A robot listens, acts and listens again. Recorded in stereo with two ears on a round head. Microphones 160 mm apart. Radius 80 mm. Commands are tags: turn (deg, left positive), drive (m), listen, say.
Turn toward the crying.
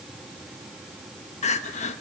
<turn deg="40"/>
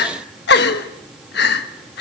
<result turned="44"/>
<turn deg="90"/>
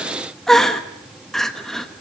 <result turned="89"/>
<say>Found it: crying, straight ahead.</say>